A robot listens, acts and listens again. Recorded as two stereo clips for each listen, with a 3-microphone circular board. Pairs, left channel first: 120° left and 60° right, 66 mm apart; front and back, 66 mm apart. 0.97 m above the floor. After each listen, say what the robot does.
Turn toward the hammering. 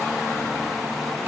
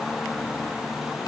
Keep listening.
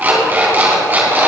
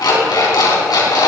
Keep listening.
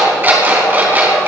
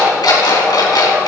I can't make out hammering to turn to.